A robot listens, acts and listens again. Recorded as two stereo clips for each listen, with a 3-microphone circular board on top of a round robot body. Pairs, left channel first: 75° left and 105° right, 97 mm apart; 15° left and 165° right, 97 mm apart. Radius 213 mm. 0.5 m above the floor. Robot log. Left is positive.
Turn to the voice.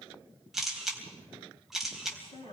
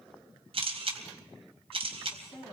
note: The woman speaking: 110° left.
cmd yaw +110
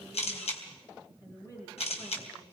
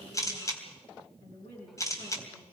note: The woman speaking is now 15° left.
cmd yaw +15
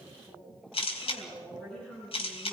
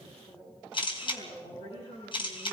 note: The woman speaking is now 10° right.
cmd yaw -10
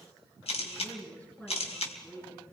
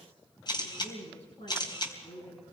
end: Found it: a woman speaking, straight ahead, over 4 m away.